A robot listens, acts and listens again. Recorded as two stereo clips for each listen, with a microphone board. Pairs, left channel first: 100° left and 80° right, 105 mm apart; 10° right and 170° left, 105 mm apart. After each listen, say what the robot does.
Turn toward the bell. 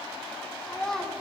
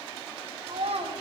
Keep listening.
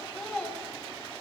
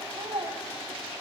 Keep listening.
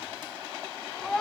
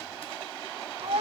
I can't make out a bell to turn to.